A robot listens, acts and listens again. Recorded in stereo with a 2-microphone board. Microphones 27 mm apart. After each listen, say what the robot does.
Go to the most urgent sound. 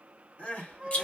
Turn 55° left.
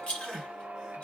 Turn 10° left.
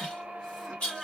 Drive 1.0 m forward.
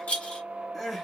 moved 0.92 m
Turn 10° left.
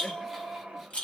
Keep listening.
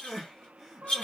Drive 1.0 m forward.
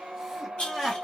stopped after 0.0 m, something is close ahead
I am next to the crying.